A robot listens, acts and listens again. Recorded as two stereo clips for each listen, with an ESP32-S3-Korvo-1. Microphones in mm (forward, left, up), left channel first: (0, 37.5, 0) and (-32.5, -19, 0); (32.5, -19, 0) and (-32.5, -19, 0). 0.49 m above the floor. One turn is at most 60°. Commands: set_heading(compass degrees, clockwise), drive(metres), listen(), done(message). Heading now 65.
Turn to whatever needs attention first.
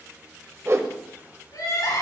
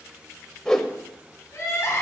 set_heading(15)
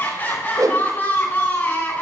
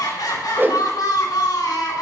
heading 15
done("Facing the crying, over 4 m away.")